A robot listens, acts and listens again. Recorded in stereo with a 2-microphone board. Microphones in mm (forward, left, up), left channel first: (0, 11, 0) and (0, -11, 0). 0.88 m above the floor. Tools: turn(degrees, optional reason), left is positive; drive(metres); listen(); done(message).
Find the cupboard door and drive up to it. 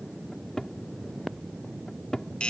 turn(degrees=30, reason="The cupboard door: about 30° left or 150° left.")
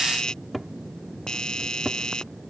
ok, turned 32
drive(metres=1.0)
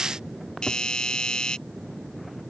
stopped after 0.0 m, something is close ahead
listen()
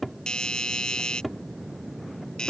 done("Something is in my way. I am facing the cupboard door but have not reached it.")